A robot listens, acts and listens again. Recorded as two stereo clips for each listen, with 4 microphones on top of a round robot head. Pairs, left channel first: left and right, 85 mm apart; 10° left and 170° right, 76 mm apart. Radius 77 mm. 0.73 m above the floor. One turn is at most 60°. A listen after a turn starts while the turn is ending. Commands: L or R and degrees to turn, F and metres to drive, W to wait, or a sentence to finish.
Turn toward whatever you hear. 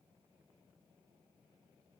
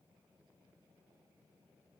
W
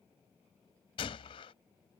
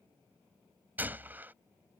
L60
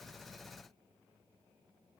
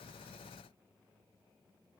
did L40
L60
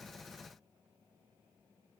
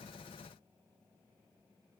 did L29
L55
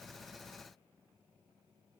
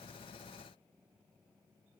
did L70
R15
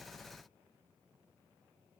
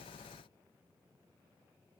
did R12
I heard a gunshot from this way, but can't make it out now.